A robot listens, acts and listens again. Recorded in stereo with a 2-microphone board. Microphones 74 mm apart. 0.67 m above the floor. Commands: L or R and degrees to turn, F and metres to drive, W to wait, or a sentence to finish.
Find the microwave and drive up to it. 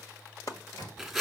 L70
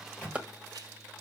L20
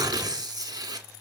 W
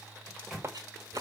F1.0
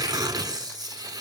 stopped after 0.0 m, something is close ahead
W
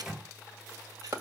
Something is in my way. I am facing the microwave but have not reached it.